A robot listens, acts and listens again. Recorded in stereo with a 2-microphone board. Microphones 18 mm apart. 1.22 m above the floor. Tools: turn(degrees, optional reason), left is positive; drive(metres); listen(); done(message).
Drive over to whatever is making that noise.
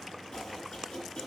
turn(degrees=50, reason="The chopping: about 50° left or 130° left.")
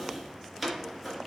drive(metres=1.0)
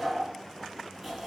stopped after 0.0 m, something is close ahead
done("Something is in my way. I am facing the chopping but have not reached it.")